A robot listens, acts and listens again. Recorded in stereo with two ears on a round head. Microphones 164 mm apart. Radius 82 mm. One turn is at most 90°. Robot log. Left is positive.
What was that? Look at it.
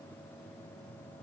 cmd idle
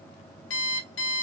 cmd yaw +90
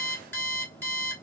note: So it is at 15° left.
cmd yaw +15
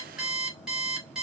end: Facing the alarm clock, 2 to 4 m away.